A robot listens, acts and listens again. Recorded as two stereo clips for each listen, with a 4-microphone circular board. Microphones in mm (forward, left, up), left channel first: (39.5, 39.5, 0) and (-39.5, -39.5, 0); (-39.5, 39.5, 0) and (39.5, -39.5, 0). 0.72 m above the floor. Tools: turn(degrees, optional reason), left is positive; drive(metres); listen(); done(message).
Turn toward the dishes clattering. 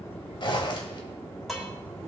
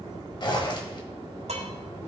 turn(degrees=-45, reason="The dishes clattering: 45° right.")
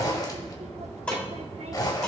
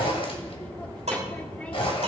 turn(degrees=-35, reason="The dishes clattering is now 35° right.")
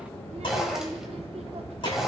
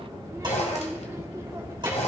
done("Facing the dishes clattering.")